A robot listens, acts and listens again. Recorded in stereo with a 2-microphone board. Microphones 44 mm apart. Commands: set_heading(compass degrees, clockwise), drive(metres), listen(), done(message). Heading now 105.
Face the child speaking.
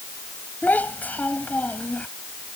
set_heading(65)
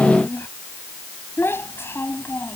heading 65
set_heading(315)
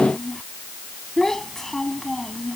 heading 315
set_heading(305)
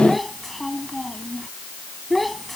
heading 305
done("Found it: a child speaking, straight ahead.")